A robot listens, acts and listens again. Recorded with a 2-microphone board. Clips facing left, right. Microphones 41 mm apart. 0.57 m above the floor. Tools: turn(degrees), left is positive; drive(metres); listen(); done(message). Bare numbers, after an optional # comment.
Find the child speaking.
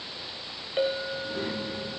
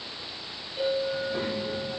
# The child speaking: about 40° right or 140° right.
turn(-40)
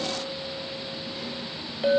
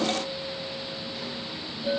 # So it is at 10° left.
turn(10)
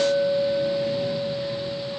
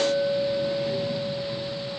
listen()
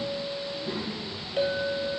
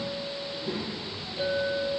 done("Found it: a child speaking, straight ahead.")